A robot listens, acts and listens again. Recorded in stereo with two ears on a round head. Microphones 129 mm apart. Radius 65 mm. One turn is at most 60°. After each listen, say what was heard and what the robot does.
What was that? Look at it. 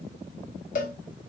The cowbell: about 55° left or 125° left. Turn 55° left.
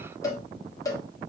So it is at 25° left. Turn 25° left.
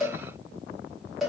Facing the cowbell.